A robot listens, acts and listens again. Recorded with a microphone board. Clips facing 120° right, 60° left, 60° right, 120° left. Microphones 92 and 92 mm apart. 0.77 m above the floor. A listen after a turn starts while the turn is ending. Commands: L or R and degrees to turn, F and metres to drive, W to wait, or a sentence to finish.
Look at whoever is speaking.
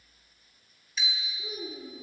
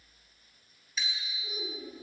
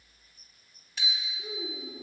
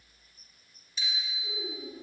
R85
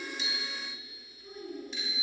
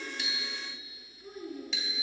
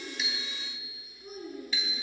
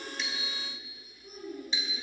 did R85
R10
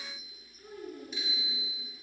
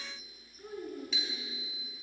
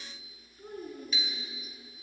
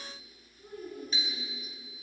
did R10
R10
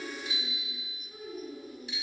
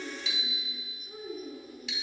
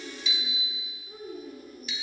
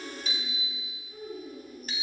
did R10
R10
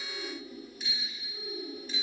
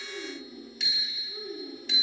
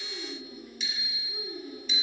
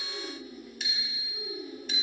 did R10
Facing the child speaking.